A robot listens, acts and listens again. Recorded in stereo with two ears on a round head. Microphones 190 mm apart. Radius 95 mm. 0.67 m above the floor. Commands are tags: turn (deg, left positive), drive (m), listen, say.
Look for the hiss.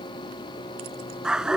<listen/>
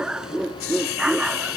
<turn deg="65"/>
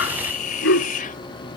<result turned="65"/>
<turn deg="40"/>
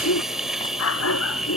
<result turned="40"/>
<say>Found it: a hiss, straight ahead.</say>